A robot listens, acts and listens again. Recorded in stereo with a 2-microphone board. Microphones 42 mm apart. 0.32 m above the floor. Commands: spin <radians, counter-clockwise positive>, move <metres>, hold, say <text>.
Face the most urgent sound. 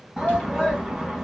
spin -0.52
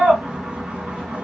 spin -2.44
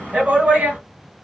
spin -0.70
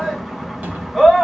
say Facing the shout, 1 to 2 m away.